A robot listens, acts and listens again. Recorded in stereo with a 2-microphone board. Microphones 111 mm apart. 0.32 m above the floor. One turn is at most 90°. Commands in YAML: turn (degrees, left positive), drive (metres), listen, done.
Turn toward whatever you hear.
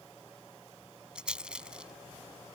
turn: -30
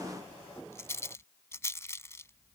turn: 25
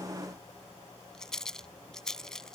done: "Found it: a rattle, straight ahead."